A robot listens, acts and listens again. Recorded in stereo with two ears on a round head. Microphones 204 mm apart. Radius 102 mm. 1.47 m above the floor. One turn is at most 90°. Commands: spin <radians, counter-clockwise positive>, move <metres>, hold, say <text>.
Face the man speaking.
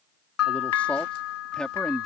spin 0.52
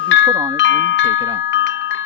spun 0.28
hold
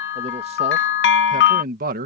spin -0.70
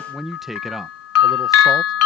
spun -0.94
say Found it: a man speaking, straight ahead.